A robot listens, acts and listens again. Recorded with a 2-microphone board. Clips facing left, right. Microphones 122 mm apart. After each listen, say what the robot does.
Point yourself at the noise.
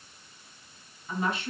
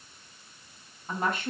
Turn 45° right.
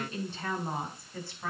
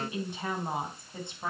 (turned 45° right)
Turn 25° right.
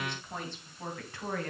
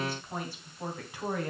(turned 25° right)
Turn 15° right.
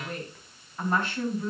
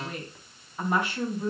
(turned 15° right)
Turn 15° right.
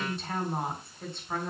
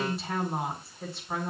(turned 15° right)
Facing the woman speaking.